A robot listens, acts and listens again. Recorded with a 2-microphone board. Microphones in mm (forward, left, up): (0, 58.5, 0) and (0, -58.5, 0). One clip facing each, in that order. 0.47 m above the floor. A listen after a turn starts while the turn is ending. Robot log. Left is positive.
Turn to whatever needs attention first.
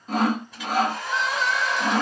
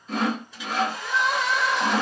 note: The crying: about 70° right or 110° right.
cmd yaw -70
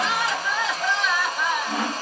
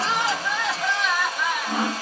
end: Facing the crying.